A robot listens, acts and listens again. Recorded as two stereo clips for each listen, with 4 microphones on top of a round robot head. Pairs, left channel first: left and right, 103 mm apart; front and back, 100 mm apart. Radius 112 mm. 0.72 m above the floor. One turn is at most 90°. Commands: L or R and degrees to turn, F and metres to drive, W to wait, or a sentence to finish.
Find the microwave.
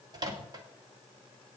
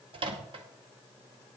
R90
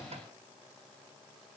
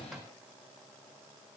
R55
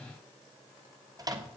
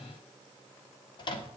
R40
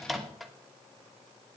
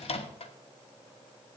Found it: a microwave, straight ahead.